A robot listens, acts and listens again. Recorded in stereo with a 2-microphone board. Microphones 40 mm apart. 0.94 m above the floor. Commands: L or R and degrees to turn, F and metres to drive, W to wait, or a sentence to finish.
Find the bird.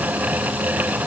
W
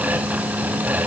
W
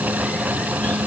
I can't make out a bird.